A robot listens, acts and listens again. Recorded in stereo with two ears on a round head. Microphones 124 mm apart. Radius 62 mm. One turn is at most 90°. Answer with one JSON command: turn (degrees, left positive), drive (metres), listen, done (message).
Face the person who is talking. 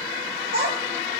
{"turn": -70}
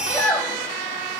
{"turn": 10}
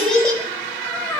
{"turn": 15}
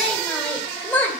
{"turn": 15}
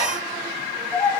{"turn": 15}
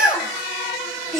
{"done": "Facing the child speaking, 2 to 4 m away."}